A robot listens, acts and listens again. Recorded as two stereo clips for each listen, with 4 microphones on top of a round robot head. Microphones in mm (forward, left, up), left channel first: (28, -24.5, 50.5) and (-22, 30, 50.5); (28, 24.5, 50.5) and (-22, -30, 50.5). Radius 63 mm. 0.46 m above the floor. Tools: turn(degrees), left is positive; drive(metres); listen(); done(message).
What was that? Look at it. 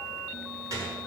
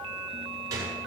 turn(degrees=180)
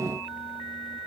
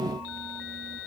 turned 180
done("Facing where the gunshot came from. I can't hear it now.")